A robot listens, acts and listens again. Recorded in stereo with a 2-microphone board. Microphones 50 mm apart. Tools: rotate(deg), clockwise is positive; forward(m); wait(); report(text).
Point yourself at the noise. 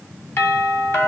rotate(-55)
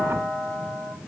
rotate(-55)
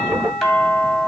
report("Found it: a doorbell, straight ahead.")